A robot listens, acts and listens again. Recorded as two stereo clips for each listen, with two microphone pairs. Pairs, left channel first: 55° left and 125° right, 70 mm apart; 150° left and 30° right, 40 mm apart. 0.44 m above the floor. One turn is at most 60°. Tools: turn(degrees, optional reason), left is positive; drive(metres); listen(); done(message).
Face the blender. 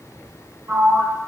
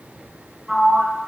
listen()
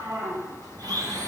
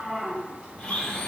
turn(degrees=-60, reason="The blender: 140° right.")
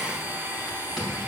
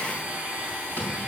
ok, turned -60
turn(degrees=-60, reason="The blender is now 70° right.")
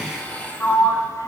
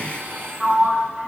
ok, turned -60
turn(degrees=-15, reason="The blender is now 15° right.")
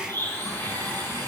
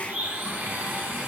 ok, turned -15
done("Facing the blender, 2 to 4 m away.")